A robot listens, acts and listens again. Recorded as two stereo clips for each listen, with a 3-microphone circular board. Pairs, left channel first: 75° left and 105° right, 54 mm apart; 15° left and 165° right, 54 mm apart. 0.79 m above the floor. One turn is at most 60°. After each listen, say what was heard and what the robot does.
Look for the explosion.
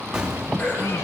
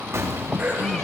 The explosion: straight behind. Turn 60° left.
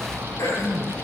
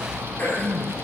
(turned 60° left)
Nothing new. It was at 120° left. Turn 60° left.
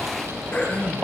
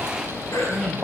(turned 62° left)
Nothing new. It was at 55° left. Turn 55° left.
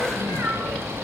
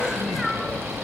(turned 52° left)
Facing where the explosion came from. I can't hear it now.